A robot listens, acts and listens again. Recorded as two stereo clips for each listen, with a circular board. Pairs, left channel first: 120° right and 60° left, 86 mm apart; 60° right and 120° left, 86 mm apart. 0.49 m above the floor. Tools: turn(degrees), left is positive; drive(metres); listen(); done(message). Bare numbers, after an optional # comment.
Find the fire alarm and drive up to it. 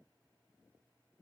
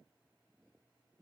listen()
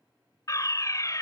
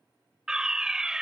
# The fire alarm: 160° right.
turn(-160)
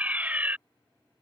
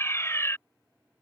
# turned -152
# The fire alarm is now 10° right.
turn(-10)
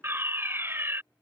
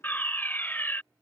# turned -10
drive(1.0)
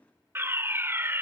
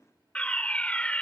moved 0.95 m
# The fire alarm is now 10° left.
turn(10)
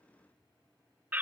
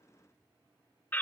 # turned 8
drive(1.0)
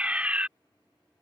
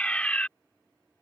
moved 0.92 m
drive(1.0)
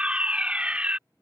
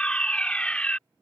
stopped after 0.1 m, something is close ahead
done("Arrived at the fire alarm, straight ahead.")